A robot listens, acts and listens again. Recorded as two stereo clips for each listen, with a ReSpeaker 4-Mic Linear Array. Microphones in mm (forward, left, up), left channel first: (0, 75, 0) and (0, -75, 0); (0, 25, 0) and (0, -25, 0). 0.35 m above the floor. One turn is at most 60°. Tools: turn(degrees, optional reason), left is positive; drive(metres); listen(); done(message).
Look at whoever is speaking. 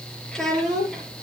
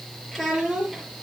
turn(degrees=30)
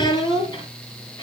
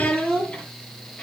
turn(degrees=60, reason="So it is at 150° left.")
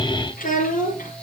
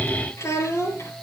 turn(degrees=60, reason="The child speaking is now 80° left.")
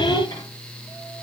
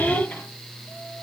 turn(degrees=20, reason="Nothing new. It was at 20° left.")
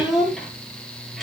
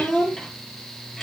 done("Facing the child speaking, over 4 m away.")